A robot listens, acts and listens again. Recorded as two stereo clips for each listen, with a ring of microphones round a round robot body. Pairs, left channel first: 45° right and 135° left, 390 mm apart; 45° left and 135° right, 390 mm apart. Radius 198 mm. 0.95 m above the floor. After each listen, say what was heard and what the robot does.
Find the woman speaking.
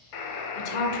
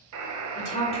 The woman speaking: 30° right. Turn 30° right.
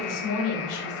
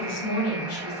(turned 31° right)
The woman speaking is now 10° right. Turn 10° right.
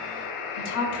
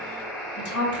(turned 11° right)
The woman speaking is now 10° right. Turn 10° right.
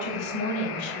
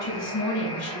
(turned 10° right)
The woman speaking is now 10° right. Turn 10° right.
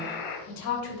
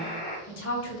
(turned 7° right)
The woman speaking is now 10° right. Turn 10° right.
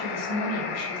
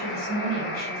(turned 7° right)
Facing the woman speaking.